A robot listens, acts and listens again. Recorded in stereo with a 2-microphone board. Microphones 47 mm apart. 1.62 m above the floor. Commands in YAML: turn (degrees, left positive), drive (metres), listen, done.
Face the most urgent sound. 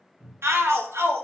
turn: -65
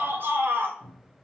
turn: -50
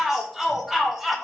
done: "Found it: a shout, straight ahead, under 1 m away."